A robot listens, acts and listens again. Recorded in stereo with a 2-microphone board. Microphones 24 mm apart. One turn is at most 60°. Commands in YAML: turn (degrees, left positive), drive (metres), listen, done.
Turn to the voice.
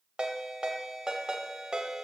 listen: true
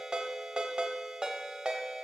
listen: true
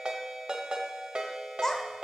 turn: 20
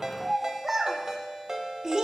turn: -25
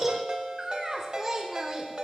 turn: -15
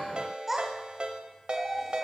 turn: -10
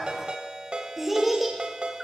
done: "Found it: a child speaking, straight ahead, 1 to 2 m away."